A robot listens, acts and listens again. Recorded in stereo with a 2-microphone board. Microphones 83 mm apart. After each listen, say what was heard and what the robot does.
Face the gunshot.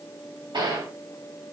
The gunshot: about 65° right or 115° right. Turn 65° right.
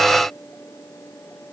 Keep listening.
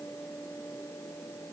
I heard a gunshot, but can't make it out now. It was about straight ahead or 50° right.